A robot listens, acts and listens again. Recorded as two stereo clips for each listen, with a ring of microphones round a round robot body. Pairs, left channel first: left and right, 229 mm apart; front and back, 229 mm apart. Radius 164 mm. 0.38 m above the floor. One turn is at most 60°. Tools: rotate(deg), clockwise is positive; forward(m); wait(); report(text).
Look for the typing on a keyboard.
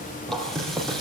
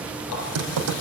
rotate(-60)
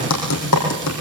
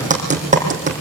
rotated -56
rotate(-60)
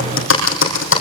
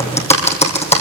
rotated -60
rotate(-60)
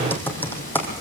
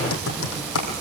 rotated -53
rotate(-10)
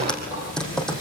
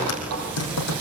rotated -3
report("Found it: typing on a keyboard, straight ahead, 2 to 4 m away.")